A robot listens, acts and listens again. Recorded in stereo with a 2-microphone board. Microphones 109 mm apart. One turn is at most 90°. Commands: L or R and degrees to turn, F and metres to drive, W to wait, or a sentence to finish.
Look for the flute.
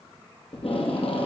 W
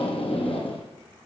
W
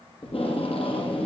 I can't make out a flute, only tape being pulled.